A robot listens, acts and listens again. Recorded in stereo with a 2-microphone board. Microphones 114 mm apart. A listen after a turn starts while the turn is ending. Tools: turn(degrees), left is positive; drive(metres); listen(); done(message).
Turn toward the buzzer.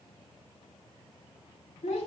listen()
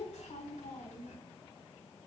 listen()
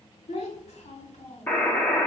turn(degrees=15)
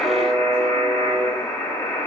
turn(degrees=150)
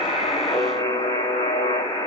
turn(degrees=45)
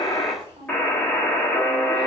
turn(degrees=10)
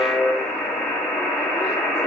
done("Facing the buzzer, 1 to 2 m away.")